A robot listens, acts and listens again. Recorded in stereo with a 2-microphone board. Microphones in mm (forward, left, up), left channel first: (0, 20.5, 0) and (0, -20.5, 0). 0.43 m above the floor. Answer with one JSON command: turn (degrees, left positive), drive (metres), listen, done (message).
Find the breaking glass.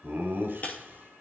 {"turn": 40}
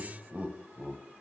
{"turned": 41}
{"listen": true}
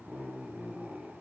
{"done": "I heard breaking glass, but can't make it out now. It was about straight ahead or 100° left."}